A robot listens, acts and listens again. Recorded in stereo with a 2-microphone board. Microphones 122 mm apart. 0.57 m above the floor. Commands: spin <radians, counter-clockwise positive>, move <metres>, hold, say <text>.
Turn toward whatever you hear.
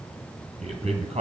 spin -1.05
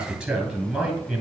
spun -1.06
say Facing the man speaking.